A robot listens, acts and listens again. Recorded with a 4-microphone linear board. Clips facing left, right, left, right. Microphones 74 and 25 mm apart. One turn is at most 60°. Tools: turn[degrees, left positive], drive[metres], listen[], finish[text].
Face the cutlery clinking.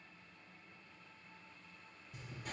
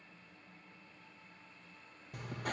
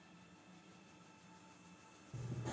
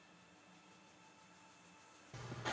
Action: listen[]
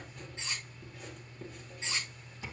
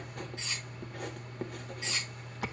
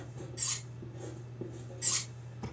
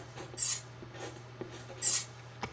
Thought: The cutlery clinking: about 25° left or 155° left.
Action: turn[25]
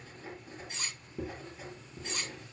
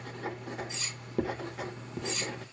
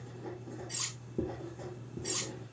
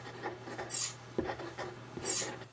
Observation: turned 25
Thought: So it is at 130° left.
Action: turn[60]
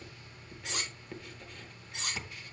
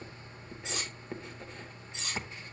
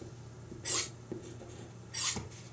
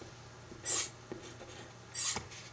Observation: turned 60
Thought: The cutlery clinking is now 65° left.
Action: turn[60]
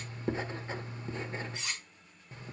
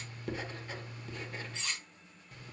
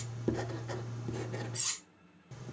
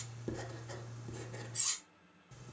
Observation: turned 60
Thought: The cutlery clinking is now 10° left.
Action: turn[10]
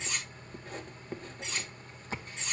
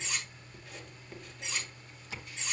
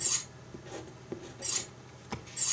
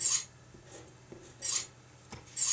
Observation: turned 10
Action: finish[Found it: cutlery clinking, straight ahead, 2 to 4 m away.]